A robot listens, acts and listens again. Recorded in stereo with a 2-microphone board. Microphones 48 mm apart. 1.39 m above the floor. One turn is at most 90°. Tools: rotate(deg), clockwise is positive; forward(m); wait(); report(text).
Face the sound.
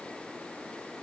wait()
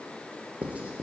rotate(25)
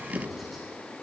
report("Facing the writing.")